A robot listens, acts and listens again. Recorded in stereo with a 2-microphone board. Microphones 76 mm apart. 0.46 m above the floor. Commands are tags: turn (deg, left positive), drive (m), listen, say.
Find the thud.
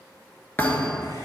<turn deg="25"/>
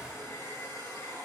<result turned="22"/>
<listen/>
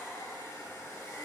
<say>I heard a thud, but can't make it out now. It was about 5° left or 130° left.</say>